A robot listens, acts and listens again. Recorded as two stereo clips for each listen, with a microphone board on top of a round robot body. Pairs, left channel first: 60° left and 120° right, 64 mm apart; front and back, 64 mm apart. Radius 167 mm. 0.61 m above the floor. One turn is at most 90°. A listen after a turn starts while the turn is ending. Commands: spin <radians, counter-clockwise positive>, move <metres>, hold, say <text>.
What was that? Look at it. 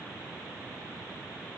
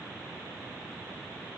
hold
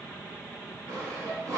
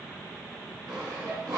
spin -1.57
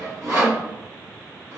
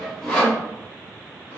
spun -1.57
spin -1.13
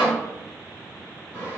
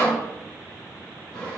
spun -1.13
say Facing the sawing.